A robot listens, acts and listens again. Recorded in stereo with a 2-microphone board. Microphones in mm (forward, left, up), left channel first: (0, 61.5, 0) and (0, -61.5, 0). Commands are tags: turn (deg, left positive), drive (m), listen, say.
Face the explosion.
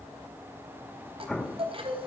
<turn deg="30"/>
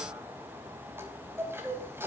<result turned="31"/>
<listen/>
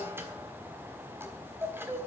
<say>I heard an explosion, but can't make it out now. It was about 25° right or 140° left.</say>